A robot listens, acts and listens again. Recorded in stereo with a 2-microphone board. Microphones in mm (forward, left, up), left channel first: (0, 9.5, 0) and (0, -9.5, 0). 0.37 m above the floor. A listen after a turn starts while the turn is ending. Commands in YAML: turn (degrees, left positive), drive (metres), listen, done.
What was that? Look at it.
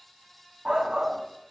turn: -50
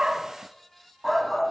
done: "Found it: a shout, straight ahead, 2 to 4 m away."